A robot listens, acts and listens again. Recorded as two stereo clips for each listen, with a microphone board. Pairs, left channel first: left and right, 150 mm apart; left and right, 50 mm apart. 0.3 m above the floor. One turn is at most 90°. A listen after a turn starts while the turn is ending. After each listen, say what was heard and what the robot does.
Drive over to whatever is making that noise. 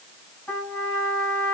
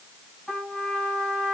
Turn 30° left.
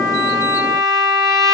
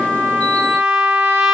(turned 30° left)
So it is at 25° right. Turn 25° right.
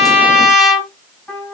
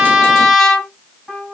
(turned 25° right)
Drive 1.0 m forward.
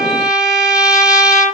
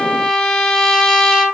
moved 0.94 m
Drive 1.0 m forward.
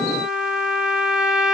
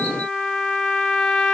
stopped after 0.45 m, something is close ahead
Arrived at the trumpet, straight ahead.